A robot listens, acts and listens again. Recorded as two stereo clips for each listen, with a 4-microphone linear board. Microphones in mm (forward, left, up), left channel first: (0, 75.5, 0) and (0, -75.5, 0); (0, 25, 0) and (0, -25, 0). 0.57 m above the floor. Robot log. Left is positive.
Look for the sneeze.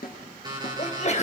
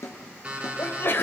note: The sneeze: about 50° left or 130° left.
cmd yaw +50
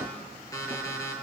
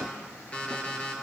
cmd idle
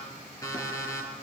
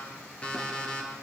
end: I heard a sneeze, but can't make it out now. It was about straight ahead or 80° left.